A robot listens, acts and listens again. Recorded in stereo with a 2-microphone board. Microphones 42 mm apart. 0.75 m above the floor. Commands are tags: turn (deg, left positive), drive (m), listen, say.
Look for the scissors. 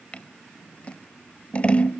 <turn deg="30"/>
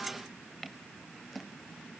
<listen/>
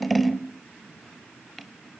<say>Facing the scissors, 1 to 2 m away.</say>